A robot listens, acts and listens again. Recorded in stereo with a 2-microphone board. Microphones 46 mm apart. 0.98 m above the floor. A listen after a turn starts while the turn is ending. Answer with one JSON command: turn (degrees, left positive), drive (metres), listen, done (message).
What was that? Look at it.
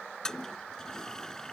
{"turn": 30}
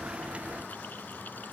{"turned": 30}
{"listen": true}
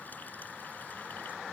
{"listen": true}
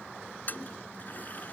{"turn": 140}
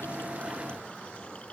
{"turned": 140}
{"listen": true}
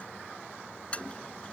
{"turn": 25}
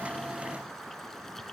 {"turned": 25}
{"listen": true}
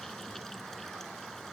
{"listen": true}
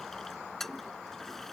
{"done": "Facing the toilet flushing."}